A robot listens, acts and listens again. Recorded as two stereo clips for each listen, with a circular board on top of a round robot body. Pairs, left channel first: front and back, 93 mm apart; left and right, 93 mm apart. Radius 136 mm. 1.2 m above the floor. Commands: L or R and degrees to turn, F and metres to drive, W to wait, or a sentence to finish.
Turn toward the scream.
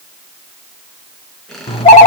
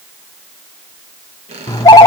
W
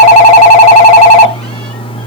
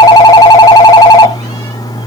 W
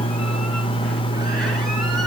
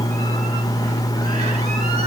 I can't make out a scream, only a squeak and a phone ringing.